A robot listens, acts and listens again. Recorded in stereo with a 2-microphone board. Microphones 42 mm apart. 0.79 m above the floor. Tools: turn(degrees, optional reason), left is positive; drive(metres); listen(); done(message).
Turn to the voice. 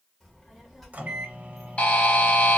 turn(degrees=30)
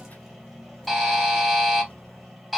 turn(degrees=145, reason="So it is at 145° left.")
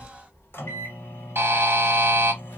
turn(degrees=80, reason="The child speaking is now 80° left.")
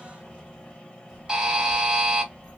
turn(degrees=-15, reason="The child speaking is now 15° right.")
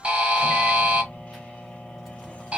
done("Facing the child speaking, 1 to 2 m away.")